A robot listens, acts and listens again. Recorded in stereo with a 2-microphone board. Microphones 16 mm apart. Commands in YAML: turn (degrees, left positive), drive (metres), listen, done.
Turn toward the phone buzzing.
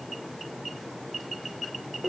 listen: true
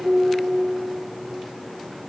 listen: true
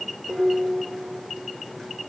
done: "I can't make out a phone buzzing to turn to."